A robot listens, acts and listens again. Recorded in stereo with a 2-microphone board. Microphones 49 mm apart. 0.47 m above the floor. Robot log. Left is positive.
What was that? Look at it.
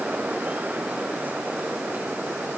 cmd idle
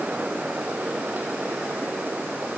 cmd idle
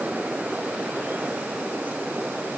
end: I can't make out anything to turn to.